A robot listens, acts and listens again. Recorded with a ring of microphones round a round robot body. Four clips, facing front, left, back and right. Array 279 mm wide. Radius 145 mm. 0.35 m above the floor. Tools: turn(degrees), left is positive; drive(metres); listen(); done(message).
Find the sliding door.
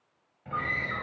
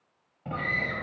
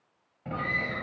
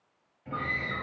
turn(degrees=125)
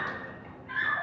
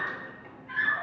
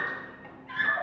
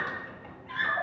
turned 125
turn(degrees=-20)
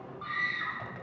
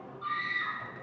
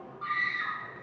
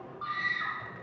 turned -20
listen()
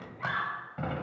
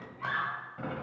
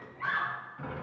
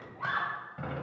done("Facing the sliding door.")